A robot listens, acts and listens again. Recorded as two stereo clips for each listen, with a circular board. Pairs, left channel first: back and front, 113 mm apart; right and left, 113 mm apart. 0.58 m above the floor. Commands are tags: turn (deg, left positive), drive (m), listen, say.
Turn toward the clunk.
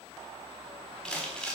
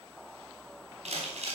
<listen/>
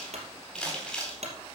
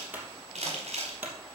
<turn deg="15"/>
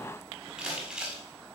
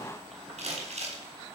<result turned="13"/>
<say>Facing where the clunk came from. I can't hear it now.</say>